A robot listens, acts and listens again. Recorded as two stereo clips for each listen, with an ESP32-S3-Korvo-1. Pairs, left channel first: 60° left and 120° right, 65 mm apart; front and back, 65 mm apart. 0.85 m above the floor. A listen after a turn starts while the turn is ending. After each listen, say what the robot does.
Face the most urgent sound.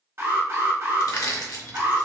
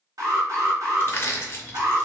Turn 165° right.
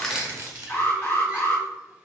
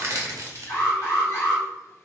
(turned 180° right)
Turn 10° left.
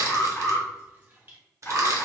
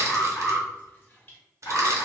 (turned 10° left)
Facing the alarm, 1 to 2 m away.